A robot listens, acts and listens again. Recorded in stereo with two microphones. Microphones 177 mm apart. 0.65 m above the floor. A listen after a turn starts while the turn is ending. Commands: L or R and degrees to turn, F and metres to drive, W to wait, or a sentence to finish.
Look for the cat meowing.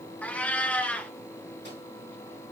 L30
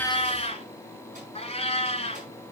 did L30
L140
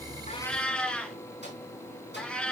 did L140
Found it: a cat meowing, straight ahead.